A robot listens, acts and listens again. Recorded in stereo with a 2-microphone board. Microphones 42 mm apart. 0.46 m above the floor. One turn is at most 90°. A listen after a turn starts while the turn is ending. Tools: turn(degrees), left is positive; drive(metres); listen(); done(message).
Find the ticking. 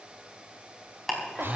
turn(degrees=30)
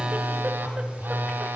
listen()
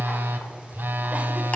listen()
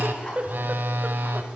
done("I heard ticking, but can't make it out now. It was about 30° right or 150° left.")